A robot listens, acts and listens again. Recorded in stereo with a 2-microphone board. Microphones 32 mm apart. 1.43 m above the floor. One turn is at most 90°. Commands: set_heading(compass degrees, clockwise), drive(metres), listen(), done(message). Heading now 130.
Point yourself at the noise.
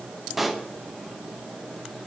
set_heading(160)
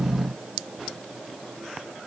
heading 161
listen()
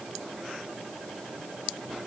done("I heard a pop, but can't make it out now. It was about 25° left or 145° right.")